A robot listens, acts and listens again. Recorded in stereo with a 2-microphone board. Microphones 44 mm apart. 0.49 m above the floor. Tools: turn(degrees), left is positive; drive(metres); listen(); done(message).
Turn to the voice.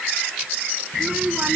turn(degrees=-25)
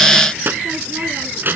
turn(degrees=-130)
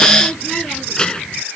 turn(degrees=20)
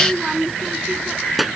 done("Found it: a child speaking, straight ahead.")